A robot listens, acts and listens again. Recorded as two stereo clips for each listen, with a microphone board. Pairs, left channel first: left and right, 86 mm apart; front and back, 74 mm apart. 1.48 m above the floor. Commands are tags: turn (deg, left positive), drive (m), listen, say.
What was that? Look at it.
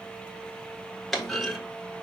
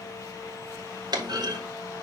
<turn deg="175"/>
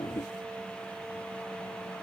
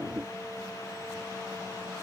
<say>Facing where the clunk came from. I can't hear it now.</say>